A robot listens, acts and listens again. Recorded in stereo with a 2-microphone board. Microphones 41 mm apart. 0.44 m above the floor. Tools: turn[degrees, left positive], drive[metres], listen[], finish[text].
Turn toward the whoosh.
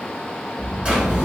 Thought: The whoosh: about 40° left or 140° left.
Action: turn[40]
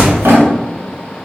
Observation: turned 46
Action: finish[Facing the whoosh, 1 to 2 m away.]